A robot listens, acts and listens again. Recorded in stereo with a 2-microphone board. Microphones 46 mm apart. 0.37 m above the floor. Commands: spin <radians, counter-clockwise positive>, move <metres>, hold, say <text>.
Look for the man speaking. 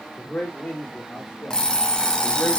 spin 0.61
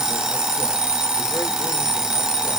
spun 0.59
hold
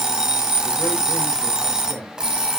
hold
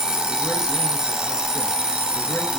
say I heard a man speaking, but can't make it out now. It was about 5° left or 110° left.